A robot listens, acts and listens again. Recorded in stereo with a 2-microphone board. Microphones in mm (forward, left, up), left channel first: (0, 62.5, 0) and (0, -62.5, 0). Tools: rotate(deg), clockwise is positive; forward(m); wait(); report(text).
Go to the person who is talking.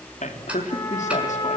rotate(-70)
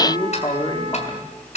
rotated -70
rotate(-35)
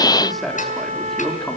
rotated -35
forward(1.0)
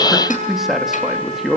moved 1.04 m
forward(1.0)
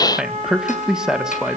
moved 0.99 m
forward(1.0)
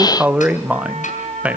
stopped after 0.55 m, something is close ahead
rotate(10)
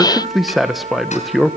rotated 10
report("Arrived at the man speaking, straight ahead.")